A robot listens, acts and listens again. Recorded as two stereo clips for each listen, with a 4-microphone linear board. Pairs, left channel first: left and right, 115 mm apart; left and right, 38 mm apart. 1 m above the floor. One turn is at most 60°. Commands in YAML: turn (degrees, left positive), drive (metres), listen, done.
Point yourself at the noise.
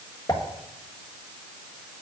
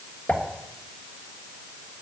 turn: 35
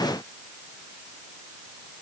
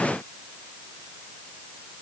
listen: true
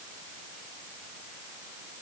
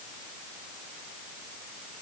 done: "I heard a pop, but can't make it out now. It was about straight ahead or 110° left."